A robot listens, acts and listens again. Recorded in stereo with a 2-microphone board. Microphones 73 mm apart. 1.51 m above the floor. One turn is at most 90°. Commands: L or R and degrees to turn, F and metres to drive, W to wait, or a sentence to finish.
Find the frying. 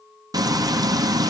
R60
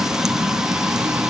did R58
R10
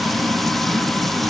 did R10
Found it: frying, straight ahead.